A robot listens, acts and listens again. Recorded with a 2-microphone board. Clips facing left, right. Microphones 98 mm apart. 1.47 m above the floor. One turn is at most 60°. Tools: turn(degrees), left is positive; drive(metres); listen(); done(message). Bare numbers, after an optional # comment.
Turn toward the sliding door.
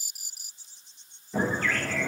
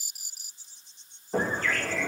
# The sliding door: about 55° right or 125° right.
turn(-55)
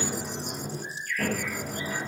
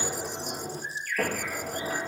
# So it is at 70° right.
turn(-60)
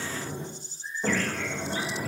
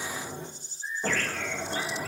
done("Found it: a sliding door, straight ahead, over 4 m away.")